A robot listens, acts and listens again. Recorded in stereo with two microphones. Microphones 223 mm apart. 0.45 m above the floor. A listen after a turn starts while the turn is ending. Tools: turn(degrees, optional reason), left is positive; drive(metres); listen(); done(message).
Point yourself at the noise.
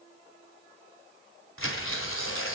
turn(degrees=70, reason="The tearing paper: about 70° left or 110° left.")
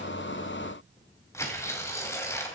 turn(degrees=15, reason="So it is at 15° left.")
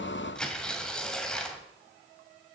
done("Facing the tearing paper, 2 to 4 m away.")